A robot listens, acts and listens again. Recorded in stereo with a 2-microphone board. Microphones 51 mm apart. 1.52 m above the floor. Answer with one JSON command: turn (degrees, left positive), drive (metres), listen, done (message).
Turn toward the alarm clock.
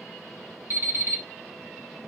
{"turn": -45}
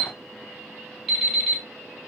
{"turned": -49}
{"done": "Found it: an alarm clock, straight ahead."}